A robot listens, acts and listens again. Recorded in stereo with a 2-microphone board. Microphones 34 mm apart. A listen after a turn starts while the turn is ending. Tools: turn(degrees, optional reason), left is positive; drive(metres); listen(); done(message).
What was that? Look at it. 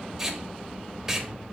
turn(degrees=-30)
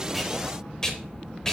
turn(degrees=15, reason="So it is at 15° left.")
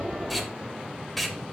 done("Found it: tape being pulled, straight ahead, 1 to 2 m away.")